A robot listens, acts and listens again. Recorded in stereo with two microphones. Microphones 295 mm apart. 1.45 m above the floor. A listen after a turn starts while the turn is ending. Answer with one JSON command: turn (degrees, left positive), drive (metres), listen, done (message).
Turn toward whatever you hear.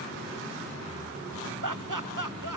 {"turn": -90}
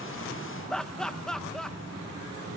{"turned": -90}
{"done": "Facing the laughter."}